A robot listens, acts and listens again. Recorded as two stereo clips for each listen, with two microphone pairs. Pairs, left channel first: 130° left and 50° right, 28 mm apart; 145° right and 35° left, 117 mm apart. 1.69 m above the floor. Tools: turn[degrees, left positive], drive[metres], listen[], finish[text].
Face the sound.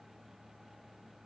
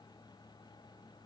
Action: listen[]
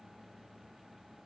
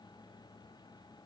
Action: listen[]
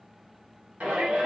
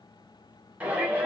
Thought: The shout: 40° right.
Action: turn[-40]
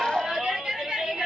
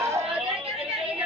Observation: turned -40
Action: finish[Found it: a shout, straight ahead.]